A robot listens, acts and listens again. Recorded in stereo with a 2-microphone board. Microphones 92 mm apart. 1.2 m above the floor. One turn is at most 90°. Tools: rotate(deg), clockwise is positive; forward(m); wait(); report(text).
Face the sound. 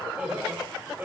rotate(20)
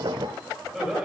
rotate(30)
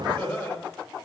rotate(-20)
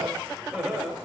rotate(10)
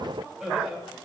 report("Facing the laughter, over 4 m away.")